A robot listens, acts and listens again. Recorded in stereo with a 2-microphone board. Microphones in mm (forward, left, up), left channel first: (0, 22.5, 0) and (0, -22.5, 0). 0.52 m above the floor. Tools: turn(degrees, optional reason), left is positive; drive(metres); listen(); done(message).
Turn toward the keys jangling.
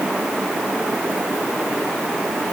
listen()
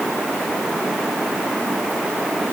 listen()
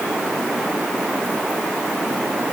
done("I can't make out keys jangling to turn to.")